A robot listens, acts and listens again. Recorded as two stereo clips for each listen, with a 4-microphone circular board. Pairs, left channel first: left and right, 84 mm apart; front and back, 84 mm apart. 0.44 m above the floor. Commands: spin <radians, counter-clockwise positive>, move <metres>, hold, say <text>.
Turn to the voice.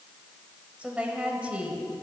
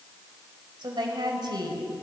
spin -2.88
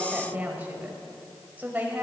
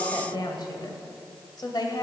spin -0.44
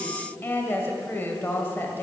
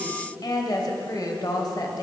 spin 0.52
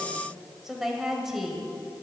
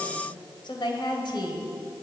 say Facing the woman speaking, 1 to 2 m away.